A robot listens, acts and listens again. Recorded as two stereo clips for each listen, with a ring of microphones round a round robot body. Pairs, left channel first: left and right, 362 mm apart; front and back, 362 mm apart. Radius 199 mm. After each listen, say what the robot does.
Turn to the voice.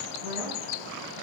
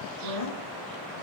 Turn 35° right.
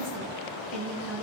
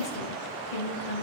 Facing the woman speaking, over 4 m away.